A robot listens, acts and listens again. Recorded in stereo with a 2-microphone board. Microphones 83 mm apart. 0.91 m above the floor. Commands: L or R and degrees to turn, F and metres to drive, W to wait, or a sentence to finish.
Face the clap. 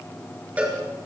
W
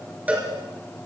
W
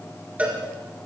I can't make out a clap, only a cowbell.